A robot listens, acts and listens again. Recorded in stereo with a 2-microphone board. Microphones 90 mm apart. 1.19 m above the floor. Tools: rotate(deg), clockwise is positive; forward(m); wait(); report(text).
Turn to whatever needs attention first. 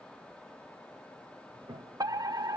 rotate(45)
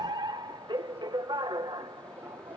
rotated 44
rotate(80)
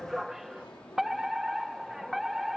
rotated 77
report("Facing the fire alarm.")